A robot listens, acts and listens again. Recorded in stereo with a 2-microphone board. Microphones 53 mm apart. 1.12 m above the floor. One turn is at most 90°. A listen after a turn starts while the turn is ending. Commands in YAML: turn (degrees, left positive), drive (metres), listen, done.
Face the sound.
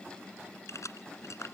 turn: 65
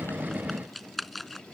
done: "Found it: keys jangling, straight ahead."